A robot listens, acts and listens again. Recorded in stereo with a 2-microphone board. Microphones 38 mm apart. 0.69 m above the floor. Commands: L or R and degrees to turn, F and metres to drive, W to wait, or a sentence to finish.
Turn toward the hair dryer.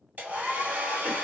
R50
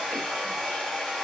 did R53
Facing the hair dryer.